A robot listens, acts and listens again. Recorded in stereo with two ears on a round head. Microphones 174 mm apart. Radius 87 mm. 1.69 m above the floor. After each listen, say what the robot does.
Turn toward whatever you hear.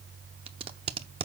Turn 30° right.
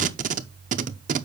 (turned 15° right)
Turn 140° right.
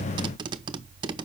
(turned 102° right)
Turn 25° right.
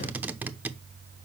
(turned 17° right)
Turn 10° right.
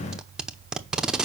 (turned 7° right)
Facing the tape being pulled, under 1 m away.